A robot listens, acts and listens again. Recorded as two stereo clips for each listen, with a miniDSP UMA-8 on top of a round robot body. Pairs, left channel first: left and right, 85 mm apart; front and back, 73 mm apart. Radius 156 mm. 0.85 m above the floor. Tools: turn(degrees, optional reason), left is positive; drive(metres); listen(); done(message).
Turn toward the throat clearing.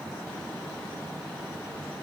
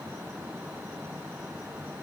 listen()
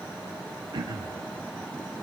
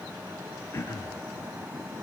turn(degrees=-55, reason="The throat clearing: 55° right.")
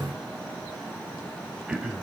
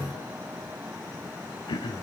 turn(degrees=-10, reason="The throat clearing is now 10° right.")
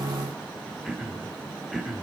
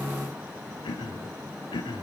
done("Facing the throat clearing.")